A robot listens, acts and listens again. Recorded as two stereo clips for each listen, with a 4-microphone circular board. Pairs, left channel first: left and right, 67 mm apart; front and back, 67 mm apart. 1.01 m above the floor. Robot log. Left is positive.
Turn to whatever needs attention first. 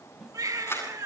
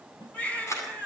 note: The baby crying: 70° right.
cmd yaw -70
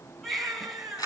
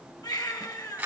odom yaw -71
end: Facing the baby crying.